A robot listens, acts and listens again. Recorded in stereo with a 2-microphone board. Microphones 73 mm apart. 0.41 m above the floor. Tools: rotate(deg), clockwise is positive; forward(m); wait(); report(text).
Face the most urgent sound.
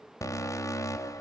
rotate(-45)
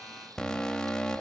rotate(-10)
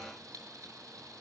wait()
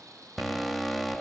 report("Found it: an alarm, straight ahead, 1 to 2 m away.")